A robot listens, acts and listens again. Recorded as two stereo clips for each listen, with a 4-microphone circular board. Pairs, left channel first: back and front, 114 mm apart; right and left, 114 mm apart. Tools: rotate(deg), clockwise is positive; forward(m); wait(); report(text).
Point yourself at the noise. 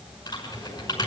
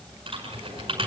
rotate(-130)
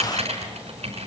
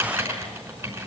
rotate(-25)
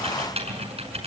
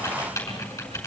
rotate(25)
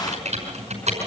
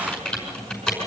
report("Found it: typing on a keyboard, straight ahead, over 4 m away.")